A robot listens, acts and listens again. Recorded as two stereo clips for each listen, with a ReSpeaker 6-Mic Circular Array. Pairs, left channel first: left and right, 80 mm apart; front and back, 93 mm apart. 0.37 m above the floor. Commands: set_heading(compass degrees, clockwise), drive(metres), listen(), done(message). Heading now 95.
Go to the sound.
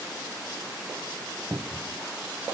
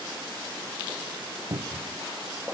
set_heading(225)
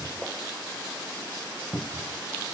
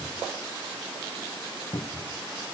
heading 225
drive(1.0)
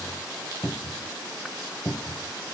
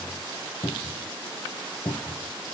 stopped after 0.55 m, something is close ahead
done("Something is in my way. I am facing the cupboard door but have not reached it.")